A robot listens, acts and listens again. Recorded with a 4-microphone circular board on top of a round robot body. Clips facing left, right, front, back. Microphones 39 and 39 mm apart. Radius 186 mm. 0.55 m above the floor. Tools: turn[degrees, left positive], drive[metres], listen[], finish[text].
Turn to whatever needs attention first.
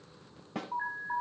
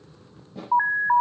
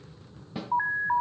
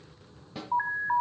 Thought: The alarm: 90° right.
Action: turn[-90]
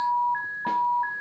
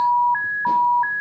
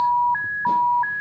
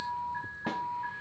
Thought: The alarm is now 30° right.
Action: turn[-30]
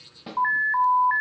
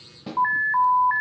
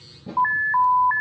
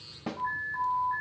Action: finish[Facing the alarm.]